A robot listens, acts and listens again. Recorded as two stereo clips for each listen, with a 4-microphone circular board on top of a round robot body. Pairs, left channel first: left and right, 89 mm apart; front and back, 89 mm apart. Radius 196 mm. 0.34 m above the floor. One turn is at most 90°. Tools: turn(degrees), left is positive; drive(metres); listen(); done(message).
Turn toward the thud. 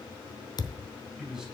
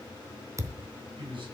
turn(degrees=90)
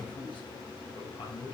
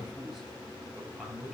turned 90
turn(degrees=35)
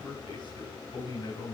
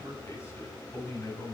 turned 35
done("Facing where the thud came from. I can't hear it now.")